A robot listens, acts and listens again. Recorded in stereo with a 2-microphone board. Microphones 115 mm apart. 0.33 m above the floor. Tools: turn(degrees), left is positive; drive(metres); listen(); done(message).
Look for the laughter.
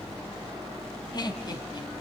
turn(degrees=40)
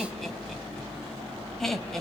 done("Facing the laughter, 2 to 4 m away.")